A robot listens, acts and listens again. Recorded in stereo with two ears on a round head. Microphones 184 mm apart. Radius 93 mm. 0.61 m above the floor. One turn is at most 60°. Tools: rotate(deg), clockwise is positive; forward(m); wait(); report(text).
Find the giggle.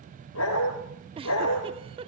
rotate(25)
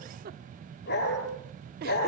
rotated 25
rotate(60)
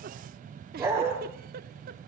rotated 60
rotate(55)
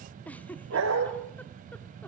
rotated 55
rotate(-10)
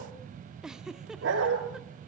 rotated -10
report("Facing the giggle, under 1 m away.")